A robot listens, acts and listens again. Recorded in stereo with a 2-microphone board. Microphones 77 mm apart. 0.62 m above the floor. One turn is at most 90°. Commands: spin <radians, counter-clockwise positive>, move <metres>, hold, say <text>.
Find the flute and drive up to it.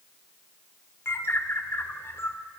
hold
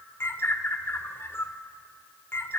hold
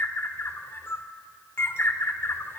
say I can't make out a flute, only a bird.